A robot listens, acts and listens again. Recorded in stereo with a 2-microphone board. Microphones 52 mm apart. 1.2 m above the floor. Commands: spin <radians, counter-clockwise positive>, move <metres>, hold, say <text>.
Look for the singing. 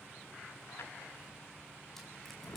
hold
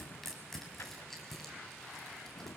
hold
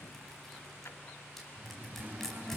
spin -0.61
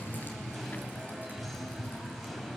say Found it: singing, straight ahead.